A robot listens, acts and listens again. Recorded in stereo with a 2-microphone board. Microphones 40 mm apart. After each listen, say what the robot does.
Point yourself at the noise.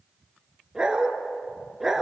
Turn 30° right.
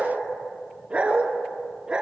Turn 25° right.
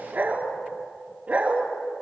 Turn 145° right.
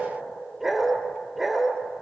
Turn 10° right.
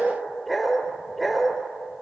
Found it: a dog barking, straight ahead, 2 to 4 m away.